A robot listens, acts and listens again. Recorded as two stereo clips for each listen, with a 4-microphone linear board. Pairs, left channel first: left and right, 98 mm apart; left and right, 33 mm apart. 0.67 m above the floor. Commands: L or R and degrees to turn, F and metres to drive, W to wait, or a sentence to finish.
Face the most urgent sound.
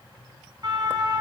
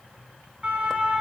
R45
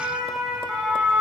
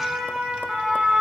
Facing the siren, over 4 m away.